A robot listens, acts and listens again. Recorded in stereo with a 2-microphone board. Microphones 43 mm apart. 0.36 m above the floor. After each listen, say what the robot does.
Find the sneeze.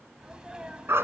Turn 20° right.
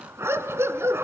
Keep listening.
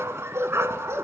I heard a sneeze, but can't make it out now. It was about straight ahead or 140° right.